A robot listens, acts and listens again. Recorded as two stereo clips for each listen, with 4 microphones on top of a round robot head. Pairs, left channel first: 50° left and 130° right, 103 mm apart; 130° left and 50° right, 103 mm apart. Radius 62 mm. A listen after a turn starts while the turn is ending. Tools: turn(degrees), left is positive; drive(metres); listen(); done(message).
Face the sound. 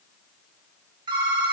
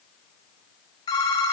turn(degrees=180)
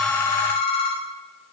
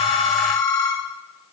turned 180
turn(degrees=75)
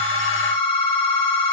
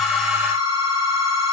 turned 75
done("Facing the phone ringing, 1 to 2 m away.")